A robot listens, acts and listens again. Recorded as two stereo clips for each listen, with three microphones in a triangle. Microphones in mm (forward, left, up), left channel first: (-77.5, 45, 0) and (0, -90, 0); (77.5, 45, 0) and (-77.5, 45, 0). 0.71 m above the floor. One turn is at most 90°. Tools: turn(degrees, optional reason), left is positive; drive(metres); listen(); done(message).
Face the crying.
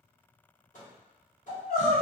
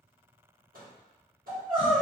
turn(degrees=90, reason="The crying: 105° left.")
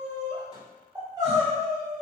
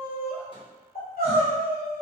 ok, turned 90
done("Found it: crying, straight ahead.")